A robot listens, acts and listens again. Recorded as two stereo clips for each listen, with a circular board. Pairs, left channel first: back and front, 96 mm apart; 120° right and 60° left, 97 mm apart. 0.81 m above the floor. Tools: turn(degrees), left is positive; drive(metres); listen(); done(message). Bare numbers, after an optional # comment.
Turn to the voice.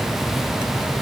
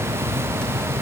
listen()
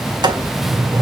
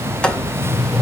listen()
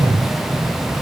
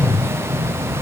done("I can't make out anyone speaking to turn to.")